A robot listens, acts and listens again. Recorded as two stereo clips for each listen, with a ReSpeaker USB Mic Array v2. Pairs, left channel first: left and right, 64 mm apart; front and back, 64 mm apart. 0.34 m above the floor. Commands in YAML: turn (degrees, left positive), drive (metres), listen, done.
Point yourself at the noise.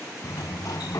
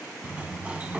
turn: 110
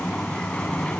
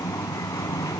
turn: 15
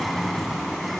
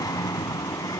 done: "Found it: a sliding door, straight ahead, under 1 m away."